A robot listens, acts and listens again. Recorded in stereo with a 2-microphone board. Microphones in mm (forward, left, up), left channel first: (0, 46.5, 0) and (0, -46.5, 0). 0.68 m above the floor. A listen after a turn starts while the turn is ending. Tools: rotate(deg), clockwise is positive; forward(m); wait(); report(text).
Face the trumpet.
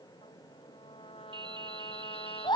rotate(-90)
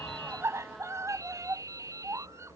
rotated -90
wait()
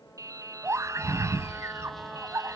wait()
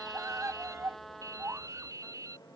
report("Found it: a trumpet, straight ahead.")